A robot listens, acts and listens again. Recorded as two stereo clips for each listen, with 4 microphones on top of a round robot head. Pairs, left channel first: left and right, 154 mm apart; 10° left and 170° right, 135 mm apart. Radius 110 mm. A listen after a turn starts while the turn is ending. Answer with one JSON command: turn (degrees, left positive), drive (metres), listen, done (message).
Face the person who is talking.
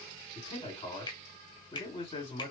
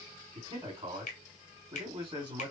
{"turn": 145}
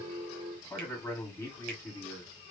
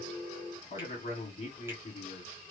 {"turn": 15}
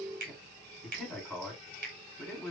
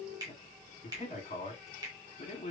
{"done": "Facing the man speaking, 2 to 4 m away."}